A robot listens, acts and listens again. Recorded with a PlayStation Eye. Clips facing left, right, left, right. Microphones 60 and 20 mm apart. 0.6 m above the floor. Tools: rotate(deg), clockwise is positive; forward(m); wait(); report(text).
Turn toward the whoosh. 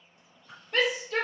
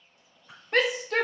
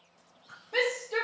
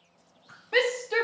rotate(30)
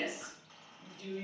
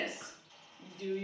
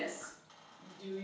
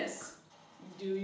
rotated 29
wait()
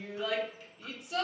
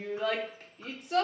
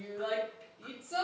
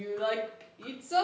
wait()
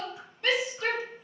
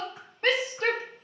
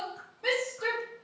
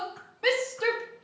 report("I heard a whoosh, but can't make it out now. It was about 15° left or 140° right.")